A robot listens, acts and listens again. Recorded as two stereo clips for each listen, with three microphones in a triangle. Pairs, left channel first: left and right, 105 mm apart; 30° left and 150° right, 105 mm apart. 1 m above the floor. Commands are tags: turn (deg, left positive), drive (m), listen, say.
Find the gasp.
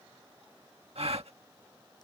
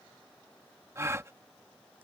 <turn deg="-85"/>
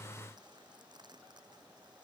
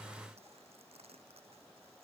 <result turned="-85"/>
<say>Facing where the gasp came from. I can't hear it now.</say>